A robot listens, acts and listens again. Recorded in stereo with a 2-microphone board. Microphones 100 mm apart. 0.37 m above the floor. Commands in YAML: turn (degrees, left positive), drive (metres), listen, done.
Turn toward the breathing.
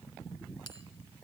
listen: true
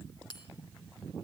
listen: true
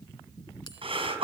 turn: -65
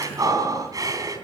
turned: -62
turn: -40
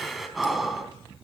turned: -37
done: "Found it: breathing, straight ahead, 2 to 4 m away."